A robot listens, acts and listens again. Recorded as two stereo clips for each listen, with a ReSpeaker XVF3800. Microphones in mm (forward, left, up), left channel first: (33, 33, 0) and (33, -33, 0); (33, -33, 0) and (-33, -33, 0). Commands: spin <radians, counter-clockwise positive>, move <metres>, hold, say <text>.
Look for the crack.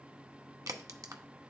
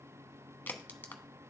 spin -1.13
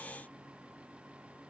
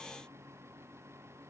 say Facing where the crack came from. I can't hear it now.